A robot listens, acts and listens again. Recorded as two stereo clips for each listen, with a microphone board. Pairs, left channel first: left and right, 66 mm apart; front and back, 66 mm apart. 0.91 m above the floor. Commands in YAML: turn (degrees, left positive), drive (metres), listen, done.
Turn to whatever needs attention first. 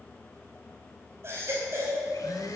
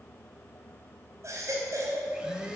turn: -135
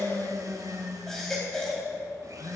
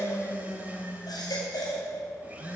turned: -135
done: "Facing the baby crying."